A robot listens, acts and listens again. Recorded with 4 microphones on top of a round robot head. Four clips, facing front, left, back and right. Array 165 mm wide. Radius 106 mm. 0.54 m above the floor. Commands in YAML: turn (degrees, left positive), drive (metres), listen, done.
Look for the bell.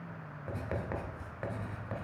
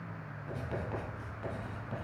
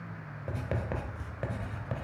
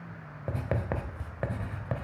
listen: true
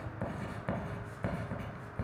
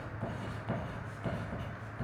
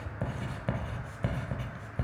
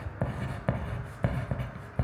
listen: true
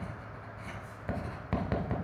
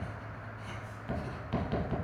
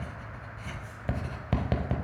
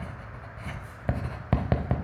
done: "I can't make out a bell to turn to."